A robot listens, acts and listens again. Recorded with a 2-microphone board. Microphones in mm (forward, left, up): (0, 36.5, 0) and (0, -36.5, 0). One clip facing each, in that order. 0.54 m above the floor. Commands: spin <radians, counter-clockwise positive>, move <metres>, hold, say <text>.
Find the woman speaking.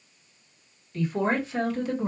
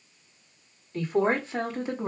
spin -0.44
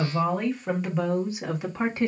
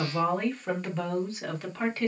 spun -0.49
spin 0.35
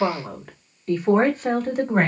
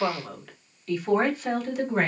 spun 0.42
spin 0.70
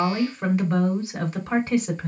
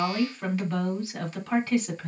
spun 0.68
spin 0.35
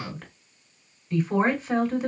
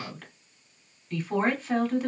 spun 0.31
say Facing the woman speaking.